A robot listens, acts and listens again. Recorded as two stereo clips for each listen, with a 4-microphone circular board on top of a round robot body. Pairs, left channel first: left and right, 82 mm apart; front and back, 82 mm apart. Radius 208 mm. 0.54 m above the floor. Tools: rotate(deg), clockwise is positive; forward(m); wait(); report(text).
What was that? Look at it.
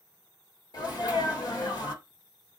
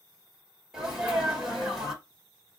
rotate(-95)
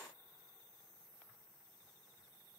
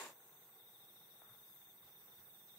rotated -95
report("I heard a sneeze from this way, but can't make it out now.")